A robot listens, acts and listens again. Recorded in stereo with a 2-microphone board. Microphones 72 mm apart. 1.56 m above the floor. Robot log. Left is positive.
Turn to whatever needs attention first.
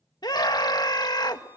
note: The scream: about 70° left or 110° left.
cmd yaw +70
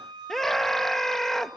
end: Facing the scream, 1 to 2 m away.